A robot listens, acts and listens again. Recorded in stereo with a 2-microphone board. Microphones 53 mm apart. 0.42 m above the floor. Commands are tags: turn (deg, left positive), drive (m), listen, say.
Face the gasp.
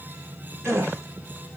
<turn deg="-55"/>
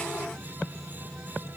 <listen/>
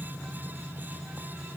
<say>I heard a gasp, but can't make it out now. It was about straight ahead or 70° right.</say>